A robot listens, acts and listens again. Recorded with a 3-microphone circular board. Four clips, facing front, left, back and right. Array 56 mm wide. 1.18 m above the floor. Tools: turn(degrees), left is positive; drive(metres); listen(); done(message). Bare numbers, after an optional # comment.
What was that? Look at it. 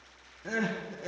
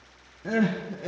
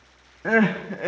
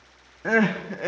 # The crying: 140° right.
turn(-140)
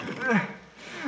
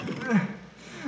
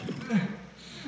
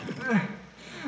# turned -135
done("Found it: crying, straight ahead, under 1 m away.")